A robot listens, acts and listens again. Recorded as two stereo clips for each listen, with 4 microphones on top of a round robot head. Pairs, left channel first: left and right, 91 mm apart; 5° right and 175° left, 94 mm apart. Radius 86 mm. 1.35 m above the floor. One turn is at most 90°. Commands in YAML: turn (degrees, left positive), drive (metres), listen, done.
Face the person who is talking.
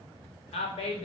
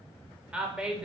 turn: 90
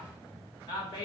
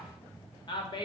turn: 35
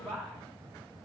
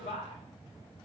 done: "Found it: a woman speaking, straight ahead, 1 to 2 m away."